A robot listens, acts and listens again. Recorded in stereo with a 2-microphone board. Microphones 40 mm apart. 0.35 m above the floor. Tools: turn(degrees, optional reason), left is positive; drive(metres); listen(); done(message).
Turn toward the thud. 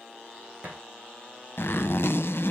turn(degrees=-25, reason="The thud: about 25° right or 155° right.")
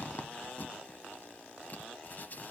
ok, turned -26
listen()
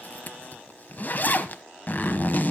done("I heard a thud, but can't make it out now. It was about straight ahead or 125° right.")